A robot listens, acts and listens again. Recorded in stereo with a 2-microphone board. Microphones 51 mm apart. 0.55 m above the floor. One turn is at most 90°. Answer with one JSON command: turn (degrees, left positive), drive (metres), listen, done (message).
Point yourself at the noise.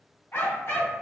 {"turn": 65}
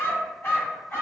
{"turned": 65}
{"turn": 40}
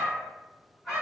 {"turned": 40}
{"done": "Found it: a dog barking, straight ahead, 2 to 4 m away."}